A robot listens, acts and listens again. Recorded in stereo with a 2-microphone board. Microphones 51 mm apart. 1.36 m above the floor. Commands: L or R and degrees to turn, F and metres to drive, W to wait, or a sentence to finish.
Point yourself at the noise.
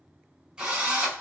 R15
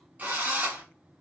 R150
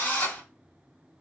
L30
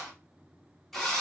Facing the drill, 1 to 2 m away.